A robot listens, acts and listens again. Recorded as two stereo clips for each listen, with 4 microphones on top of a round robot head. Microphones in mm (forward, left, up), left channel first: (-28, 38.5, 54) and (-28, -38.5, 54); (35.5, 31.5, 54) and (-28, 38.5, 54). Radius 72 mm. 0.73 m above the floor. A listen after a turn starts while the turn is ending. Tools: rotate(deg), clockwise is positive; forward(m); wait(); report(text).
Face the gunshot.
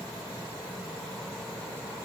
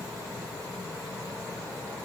wait()
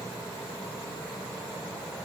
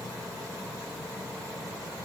wait()
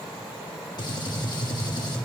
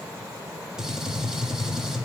rotate(-95)
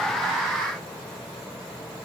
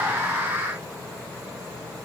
report("I heard a gunshot from this way, but can't make it out now.")